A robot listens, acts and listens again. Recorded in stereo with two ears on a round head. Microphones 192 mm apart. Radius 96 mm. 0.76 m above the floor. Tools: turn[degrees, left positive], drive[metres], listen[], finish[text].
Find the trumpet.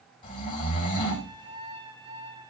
Thought: The trumpet: about 25° right or 155° right.
Action: turn[-25]
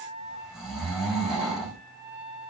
Thought: So it is at 130° right.
Action: turn[-130]
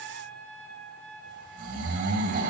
Thought: The trumpet is now 10° left.
Action: turn[10]
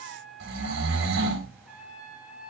Action: finish[Facing the trumpet, over 4 m away.]